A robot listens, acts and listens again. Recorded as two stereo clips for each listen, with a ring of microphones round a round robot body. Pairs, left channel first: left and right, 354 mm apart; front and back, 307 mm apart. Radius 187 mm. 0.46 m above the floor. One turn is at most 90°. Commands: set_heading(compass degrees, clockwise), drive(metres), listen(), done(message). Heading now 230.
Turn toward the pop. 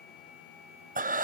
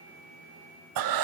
listen()
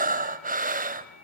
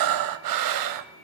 listen()
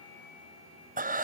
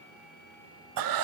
done("I can't make out a pop to turn to.")